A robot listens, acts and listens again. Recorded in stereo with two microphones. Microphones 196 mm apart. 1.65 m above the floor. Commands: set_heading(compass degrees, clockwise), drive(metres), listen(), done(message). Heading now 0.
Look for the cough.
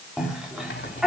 set_heading(30)
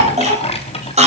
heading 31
set_heading(176)
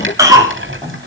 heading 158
set_heading(173)
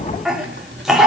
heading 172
done("Found it: a cough, straight ahead.")